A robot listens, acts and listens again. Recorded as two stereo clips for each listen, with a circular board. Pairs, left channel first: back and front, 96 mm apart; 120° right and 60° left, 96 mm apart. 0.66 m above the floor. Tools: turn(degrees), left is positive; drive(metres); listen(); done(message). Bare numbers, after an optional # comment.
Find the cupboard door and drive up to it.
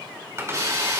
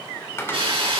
# The cupboard door: 60° right.
turn(-60)
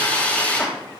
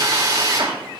listen()
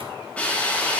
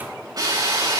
listen()
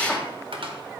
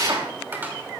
drive(1.0)
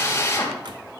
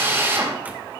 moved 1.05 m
listen()
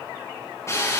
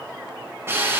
listen()
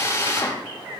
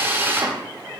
done("I heard a cupboard door from this way, but can't make it out now. I did not reach it.")